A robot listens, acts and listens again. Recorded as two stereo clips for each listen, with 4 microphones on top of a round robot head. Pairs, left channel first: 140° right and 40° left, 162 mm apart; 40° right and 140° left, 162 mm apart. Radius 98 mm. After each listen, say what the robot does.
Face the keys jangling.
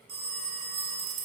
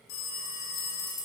Turn 30° left.
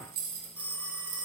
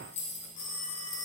Turn 15° left.
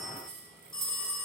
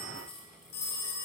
Turn 30° left.
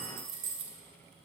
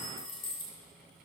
Turn 25° left.
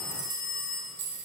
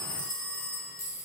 Turn 35° left.
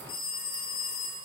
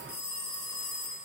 Keep listening.
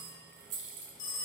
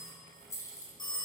Turn 35° left.
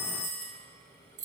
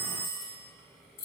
Found it: keys jangling, straight ahead, 2 to 4 m away.